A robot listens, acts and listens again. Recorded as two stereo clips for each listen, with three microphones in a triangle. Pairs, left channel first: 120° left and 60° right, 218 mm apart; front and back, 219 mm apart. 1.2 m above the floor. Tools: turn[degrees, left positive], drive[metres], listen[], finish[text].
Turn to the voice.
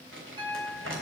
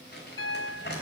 Action: listen[]
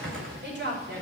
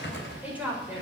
Thought: The woman speaking: 95° right.
Action: turn[-95]
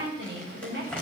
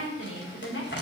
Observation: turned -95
Thought: The woman speaking is now 20° right.
Action: turn[-20]
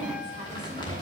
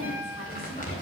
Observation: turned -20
Action: listen[]
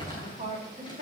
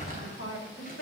Action: finish[Found it: a woman speaking, straight ahead, over 4 m away.]